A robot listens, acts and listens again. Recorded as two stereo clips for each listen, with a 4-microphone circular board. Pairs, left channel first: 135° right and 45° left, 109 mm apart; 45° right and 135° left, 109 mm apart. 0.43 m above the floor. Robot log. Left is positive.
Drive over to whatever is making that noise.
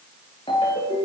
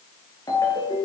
note: The ringtone: 100° right.
cmd yaw -100
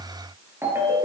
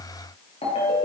note: The ringtone is now 20° right.
cmd yaw -20
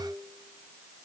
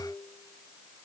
cmd idle
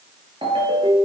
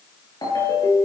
cmd fwd 1.0
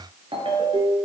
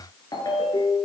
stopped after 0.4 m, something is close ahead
end: Blocked. The ringtone is further on, straight ahead.